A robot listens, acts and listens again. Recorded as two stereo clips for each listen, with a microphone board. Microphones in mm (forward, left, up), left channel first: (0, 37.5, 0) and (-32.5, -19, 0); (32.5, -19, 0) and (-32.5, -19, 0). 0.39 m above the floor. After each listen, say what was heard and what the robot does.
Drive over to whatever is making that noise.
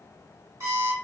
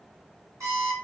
The alarm clock: 155° right. Turn 155° right.
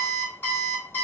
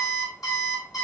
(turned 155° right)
The alarm clock is now 10° left. Turn 10° left.
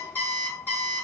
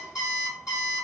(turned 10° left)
Drive 1.0 m forward.
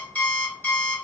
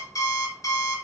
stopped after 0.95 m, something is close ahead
Arrived at the alarm clock, straight ahead.